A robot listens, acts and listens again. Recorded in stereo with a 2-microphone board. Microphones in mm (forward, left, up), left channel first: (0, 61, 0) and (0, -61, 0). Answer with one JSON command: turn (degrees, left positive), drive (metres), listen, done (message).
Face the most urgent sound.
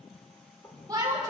{"turn": -30}
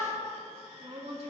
{"turn": -115}
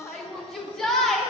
{"done": "Found it: a shout, straight ahead, 2 to 4 m away."}